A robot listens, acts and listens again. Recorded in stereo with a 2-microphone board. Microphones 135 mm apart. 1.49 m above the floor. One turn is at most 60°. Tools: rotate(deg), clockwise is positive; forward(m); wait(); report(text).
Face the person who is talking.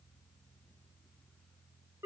wait()
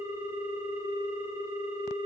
wait()
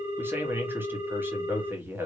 rotate(30)
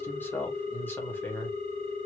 rotate(-15)
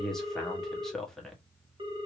report("Facing the man speaking.")